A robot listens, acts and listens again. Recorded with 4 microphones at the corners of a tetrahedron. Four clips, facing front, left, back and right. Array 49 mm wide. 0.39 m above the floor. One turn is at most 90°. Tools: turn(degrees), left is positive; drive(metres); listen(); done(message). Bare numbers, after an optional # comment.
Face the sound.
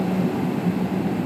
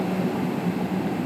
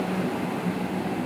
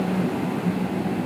listen()
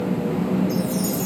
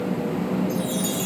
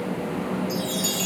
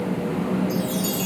# The chime: 165° left.
turn(90)
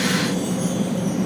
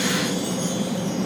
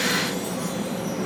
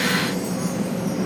# Nothing new. It was at 75° left.
turn(75)
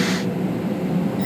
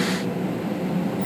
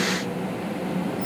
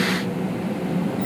done("Facing the chime.")